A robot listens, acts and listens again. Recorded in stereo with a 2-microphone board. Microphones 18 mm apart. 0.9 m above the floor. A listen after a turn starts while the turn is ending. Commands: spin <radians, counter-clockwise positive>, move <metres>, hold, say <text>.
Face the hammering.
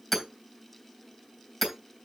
spin 0.52
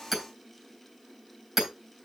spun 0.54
spin -0.52
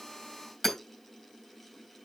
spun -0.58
say Found it: hammering, straight ahead.